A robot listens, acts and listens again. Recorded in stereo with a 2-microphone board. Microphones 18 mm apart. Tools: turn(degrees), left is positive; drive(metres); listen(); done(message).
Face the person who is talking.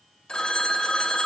listen()
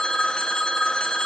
listen()
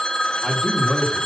turn(degrees=45)
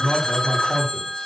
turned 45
turn(degrees=90)
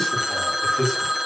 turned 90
turn(degrees=25)
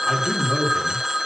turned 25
done("Found it: a man speaking, straight ahead.")